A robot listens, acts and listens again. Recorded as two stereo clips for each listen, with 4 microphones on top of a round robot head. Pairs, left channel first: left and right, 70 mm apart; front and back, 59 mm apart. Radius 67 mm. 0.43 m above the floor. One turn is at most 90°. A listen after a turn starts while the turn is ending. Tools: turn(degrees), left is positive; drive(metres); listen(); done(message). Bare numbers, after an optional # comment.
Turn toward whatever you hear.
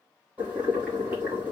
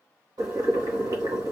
# The boiling: 165° right.
turn(-90)
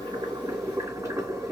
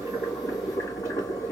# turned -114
# The boiling is now 50° right.
turn(-50)
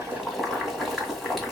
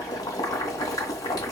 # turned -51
done("Facing the boiling, 1 to 2 m away.")